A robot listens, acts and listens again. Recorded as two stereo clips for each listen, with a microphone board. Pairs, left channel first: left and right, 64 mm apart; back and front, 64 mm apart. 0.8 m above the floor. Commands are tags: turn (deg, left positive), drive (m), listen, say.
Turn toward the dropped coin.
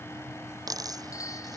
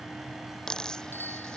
<turn deg="-100"/>
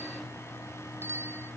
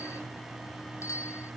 <say>I heard a dropped coin from this way, but can't make it out now.</say>